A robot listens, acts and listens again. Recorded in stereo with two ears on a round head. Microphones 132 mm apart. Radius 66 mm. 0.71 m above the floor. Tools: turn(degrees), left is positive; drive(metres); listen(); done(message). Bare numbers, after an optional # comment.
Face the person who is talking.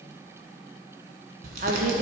# The woman speaking: about 55° right or 125° right.
turn(-55)
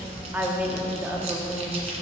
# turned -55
# So it is at 15° right.
turn(-15)
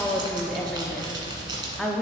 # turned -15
done("Facing the woman speaking.")